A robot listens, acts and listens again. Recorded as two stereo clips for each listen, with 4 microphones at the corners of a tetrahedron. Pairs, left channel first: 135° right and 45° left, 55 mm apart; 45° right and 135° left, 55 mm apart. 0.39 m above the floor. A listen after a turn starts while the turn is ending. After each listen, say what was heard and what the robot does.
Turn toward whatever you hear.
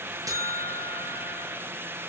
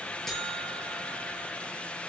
The buzzer: 40° left. Turn 40° left.
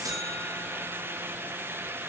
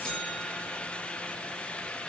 Keep listening.
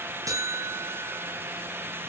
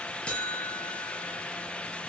The buzzer is now 25° left. Turn 25° left.
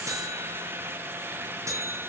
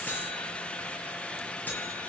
The buzzer is now 15° left. Turn 15° left.
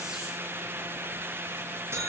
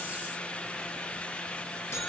Found it: a buzzer, straight ahead, over 4 m away.